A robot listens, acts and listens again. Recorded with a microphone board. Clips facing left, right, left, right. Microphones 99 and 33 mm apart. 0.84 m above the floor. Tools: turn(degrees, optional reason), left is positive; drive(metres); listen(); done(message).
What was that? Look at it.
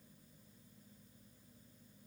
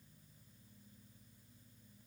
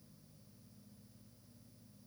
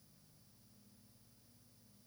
listen()
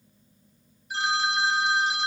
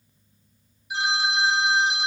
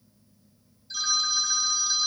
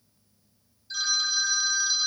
turn(degrees=-30)
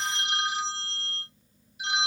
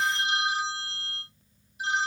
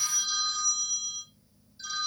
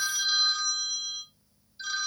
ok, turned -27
turn(degrees=-145, reason="So it is at 145° right.")
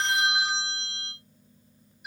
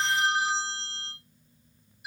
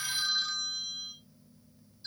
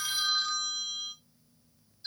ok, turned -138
done("Found it: a phone ringing, straight ahead.")